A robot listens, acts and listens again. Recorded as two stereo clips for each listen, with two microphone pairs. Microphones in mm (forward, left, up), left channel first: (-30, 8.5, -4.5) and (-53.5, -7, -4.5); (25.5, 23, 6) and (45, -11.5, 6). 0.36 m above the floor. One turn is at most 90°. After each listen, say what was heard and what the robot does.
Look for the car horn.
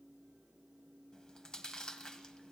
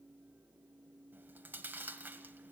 Keep listening.
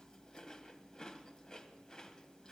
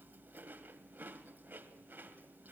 Keep listening.
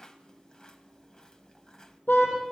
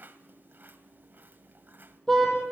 The car horn: 40° left. Turn 40° left.
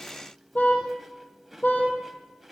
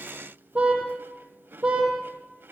Found it: a car horn, straight ahead.